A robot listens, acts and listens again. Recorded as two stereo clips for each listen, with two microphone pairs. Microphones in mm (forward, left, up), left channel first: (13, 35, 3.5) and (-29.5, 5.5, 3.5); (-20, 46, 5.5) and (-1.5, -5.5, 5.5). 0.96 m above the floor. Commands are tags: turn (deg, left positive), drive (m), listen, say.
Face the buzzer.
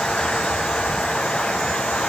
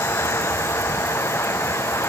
<listen/>
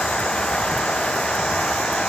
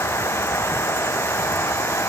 <listen/>
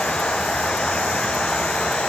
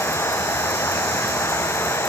<say>I can't make out a buzzer.</say>